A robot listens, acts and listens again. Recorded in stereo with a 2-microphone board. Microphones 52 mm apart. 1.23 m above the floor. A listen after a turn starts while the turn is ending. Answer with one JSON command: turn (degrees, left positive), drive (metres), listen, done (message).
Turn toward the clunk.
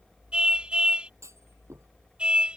{"turn": -65}
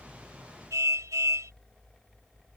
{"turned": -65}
{"listen": true}
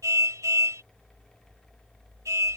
{"done": "I heard a clunk, but can't make it out now. It was about straight ahead or 50° right."}